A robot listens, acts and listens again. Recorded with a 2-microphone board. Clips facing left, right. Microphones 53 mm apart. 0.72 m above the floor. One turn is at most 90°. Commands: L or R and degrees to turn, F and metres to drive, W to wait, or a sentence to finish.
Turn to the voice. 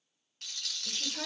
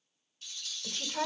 R60
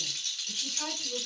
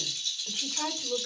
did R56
R70
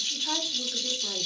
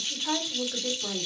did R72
R30
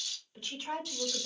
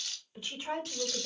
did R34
R15
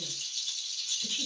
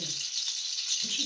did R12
W
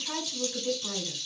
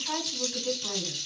Facing the woman speaking, 1 to 2 m away.